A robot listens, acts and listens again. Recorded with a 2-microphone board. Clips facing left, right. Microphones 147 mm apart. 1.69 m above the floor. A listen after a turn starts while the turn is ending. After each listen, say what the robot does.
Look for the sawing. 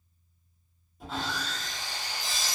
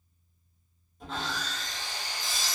Turn 30° left.
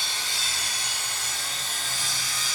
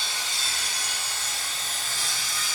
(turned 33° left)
Turn 30° right.
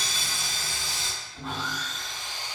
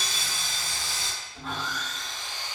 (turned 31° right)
Facing the sawing.